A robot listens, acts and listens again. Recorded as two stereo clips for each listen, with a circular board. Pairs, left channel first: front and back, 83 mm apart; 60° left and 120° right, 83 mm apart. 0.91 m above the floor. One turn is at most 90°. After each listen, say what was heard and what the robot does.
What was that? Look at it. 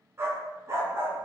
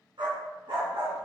The dog barking: 125° right. Turn 90° right.
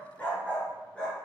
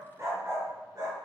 The dog barking is now 75° right. Turn 75° right.
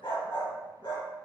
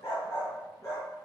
The dog barking is now 10° left. Turn 10° left.
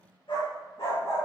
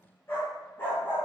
Found it: a dog barking, straight ahead.